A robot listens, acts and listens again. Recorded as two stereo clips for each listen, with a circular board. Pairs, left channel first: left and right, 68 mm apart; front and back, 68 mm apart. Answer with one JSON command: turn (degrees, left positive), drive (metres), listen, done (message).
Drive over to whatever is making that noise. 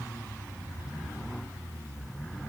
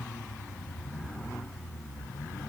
{"listen": true}
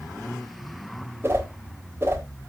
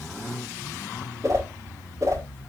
{"turn": -145}
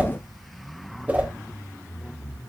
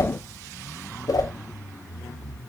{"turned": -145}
{"turn": -25}
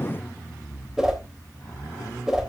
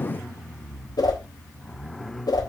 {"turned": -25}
{"turn": -10}
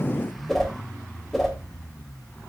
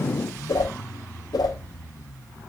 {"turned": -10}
{"drive": 1.0}
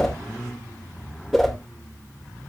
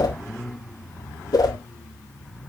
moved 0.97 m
{"drive": 1.0}
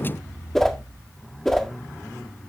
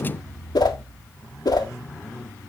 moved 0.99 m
{"drive": 1.0}
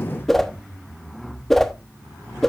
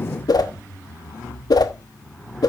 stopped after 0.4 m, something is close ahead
{"done": "Arrived at the whoosh, straight ahead."}